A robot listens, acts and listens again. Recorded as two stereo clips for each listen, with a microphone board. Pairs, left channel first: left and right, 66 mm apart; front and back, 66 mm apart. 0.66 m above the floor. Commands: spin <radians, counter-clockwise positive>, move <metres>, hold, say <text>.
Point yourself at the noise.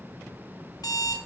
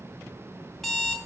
spin 1.57
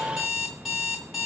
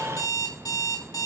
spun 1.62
say Found it: an alarm clock, straight ahead, 2 to 4 m away.